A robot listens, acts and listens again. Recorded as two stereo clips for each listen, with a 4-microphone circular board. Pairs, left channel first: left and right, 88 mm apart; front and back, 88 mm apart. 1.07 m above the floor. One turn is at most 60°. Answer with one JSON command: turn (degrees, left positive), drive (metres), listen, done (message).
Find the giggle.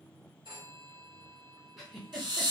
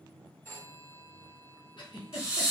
{"done": "Found it: a giggle, straight ahead."}